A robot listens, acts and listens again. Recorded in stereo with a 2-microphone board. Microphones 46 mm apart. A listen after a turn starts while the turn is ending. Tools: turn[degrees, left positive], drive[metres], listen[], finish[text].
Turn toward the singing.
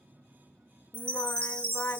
Thought: The singing: about 70° left or 110° left.
Action: turn[70]
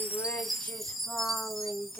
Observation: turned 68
Thought: So it is at 45° left.
Action: turn[45]
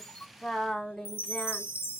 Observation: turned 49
Thought: The singing is now 10° left.
Action: turn[10]
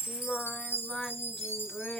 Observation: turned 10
Thought: The singing is now 15° left.
Action: turn[15]
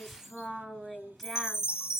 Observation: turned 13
Action: finish[Facing the singing.]